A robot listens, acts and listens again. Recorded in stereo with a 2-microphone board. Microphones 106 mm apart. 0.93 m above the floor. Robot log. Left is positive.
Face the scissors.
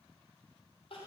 cmd idle
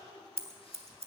note: The scissors: about 70° right or 110° right.
cmd yaw -70
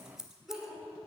end: Found it: scissors, straight ahead.